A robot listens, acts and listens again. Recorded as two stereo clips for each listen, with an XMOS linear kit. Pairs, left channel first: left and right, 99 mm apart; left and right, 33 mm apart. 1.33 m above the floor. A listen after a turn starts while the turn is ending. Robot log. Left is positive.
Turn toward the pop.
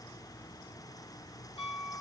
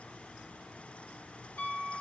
cmd idle
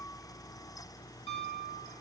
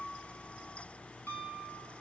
cmd idle
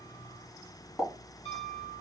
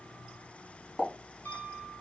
cmd yaw +30
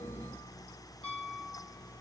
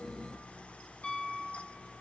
cmd idle
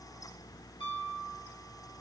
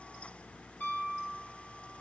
end: I heard a pop, but can't make it out now. It was about 20° right or 140° left.